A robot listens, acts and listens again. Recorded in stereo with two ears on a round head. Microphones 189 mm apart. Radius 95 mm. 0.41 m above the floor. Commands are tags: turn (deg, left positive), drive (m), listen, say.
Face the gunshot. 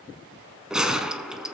<turn deg="-30"/>
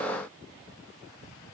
<listen/>
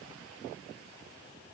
<say>I heard a gunshot, but can't make it out now. It was about 25° left or 145° right.</say>